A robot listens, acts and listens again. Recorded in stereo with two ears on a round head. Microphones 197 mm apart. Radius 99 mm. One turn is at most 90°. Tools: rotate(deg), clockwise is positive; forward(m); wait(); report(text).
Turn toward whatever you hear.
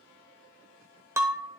rotate(30)
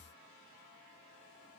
wait()
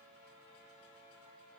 report("I heard breaking glass, but can't make it out now. It was about 20° left or 140° right.")